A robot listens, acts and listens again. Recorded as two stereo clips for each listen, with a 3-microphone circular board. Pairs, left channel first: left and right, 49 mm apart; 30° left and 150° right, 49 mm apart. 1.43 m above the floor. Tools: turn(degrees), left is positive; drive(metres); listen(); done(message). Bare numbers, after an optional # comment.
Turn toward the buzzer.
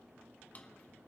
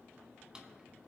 listen()
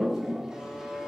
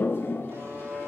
# The buzzer: 165° right.
turn(-165)
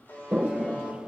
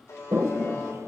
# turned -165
# The buzzer is now 45° left.
turn(45)
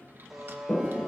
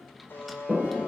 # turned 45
done("Found it: a buzzer, straight ahead, 2 to 4 m away.")